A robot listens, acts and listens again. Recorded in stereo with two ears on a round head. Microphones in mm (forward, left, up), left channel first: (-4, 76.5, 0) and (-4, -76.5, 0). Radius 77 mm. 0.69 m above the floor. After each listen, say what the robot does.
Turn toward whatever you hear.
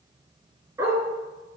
Turn 20° right.
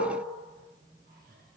Keep listening.
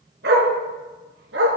Turn 100° right.
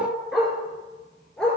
Facing the dog barking.